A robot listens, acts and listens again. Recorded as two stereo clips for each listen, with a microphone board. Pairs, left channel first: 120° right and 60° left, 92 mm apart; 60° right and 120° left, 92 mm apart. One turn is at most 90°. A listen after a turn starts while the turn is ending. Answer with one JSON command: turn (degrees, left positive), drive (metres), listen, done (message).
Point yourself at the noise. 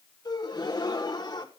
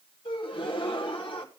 {"turn": -80}
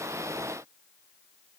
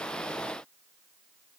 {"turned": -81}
{"done": "I heard a gasp from this way, but can't make it out now."}